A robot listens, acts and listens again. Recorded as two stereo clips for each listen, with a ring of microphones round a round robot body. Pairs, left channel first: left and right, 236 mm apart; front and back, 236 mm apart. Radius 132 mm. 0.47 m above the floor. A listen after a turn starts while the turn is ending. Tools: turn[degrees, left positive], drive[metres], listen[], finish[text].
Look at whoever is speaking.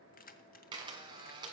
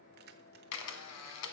Action: listen[]
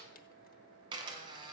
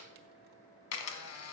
Action: listen[]
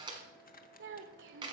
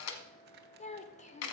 Thought: The child speaking: 55° right.
Action: turn[-55]
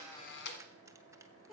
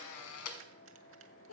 Action: finish[Facing the child speaking.]